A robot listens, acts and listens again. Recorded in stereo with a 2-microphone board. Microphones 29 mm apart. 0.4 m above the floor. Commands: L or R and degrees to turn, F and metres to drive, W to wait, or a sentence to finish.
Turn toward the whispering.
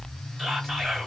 R30
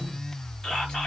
L20
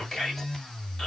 L10
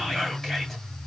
Found it: whispering, straight ahead.